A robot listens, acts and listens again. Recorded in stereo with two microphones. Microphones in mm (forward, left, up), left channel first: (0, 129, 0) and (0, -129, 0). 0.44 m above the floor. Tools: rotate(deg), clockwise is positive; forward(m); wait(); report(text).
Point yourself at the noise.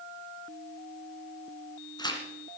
rotate(-15)
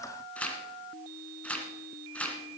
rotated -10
report("Facing the tearing paper.")